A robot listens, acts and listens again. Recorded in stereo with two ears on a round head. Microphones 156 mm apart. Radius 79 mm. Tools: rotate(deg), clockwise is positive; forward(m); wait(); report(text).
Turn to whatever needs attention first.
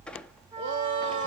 rotate(90)
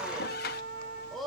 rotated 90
report("Facing the shout.")